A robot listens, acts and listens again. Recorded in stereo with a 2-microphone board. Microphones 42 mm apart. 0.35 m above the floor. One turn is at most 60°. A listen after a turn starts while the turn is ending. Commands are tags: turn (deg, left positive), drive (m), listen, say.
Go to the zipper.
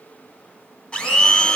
<listen/>
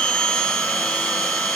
<listen/>
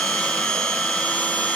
<say>I can't make out a zipper, only a blender.</say>